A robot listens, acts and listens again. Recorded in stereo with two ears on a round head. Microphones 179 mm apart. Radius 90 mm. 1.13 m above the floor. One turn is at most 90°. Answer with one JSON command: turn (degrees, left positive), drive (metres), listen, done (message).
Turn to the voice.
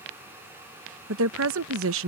{"turn": -65}
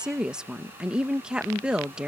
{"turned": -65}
{"done": "Found it: a woman speaking, straight ahead."}